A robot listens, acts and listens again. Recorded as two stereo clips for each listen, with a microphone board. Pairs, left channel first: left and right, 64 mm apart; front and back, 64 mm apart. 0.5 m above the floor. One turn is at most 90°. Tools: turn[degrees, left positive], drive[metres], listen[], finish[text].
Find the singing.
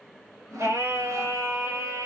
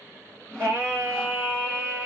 Thought: The singing: 115° right.
Action: turn[-90]
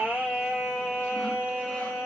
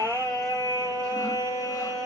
Thought: The singing is now 10° right.
Action: turn[-10]
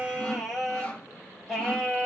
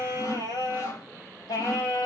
Action: finish[Found it: singing, straight ahead, over 4 m away.]